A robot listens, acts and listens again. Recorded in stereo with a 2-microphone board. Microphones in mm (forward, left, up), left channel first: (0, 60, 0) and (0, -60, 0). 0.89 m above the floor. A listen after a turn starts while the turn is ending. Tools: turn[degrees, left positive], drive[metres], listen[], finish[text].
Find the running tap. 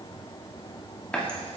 Action: turn[30]
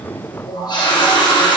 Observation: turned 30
Thought: So it is at 140° left.
Action: turn[140]
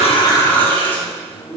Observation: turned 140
Thought: The running tap is now 15° left.
Action: turn[15]
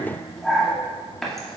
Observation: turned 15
Action: finish[Facing the running tap, 1 to 2 m away.]